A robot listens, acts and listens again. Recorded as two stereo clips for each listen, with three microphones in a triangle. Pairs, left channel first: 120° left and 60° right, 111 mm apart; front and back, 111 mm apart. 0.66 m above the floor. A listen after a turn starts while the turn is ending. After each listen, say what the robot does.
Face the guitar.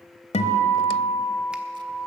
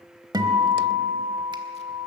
Turn 130° left.
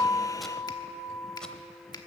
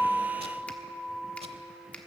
Turn 10° right.
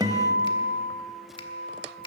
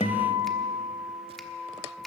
Facing the guitar.